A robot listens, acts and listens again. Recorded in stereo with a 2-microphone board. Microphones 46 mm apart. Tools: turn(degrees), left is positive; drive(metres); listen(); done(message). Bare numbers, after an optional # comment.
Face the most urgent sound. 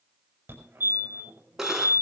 # The fire alarm: about 50° right or 130° right.
turn(-50)
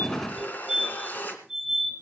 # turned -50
done("Facing the fire alarm.")